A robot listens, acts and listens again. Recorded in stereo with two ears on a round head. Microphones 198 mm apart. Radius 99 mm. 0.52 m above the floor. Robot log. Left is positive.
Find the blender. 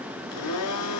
cmd yaw +90
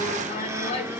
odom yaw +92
note: So it is at 15° right.
cmd yaw -15
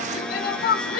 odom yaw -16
end: Found it: a blender, straight ahead, 1 to 2 m away.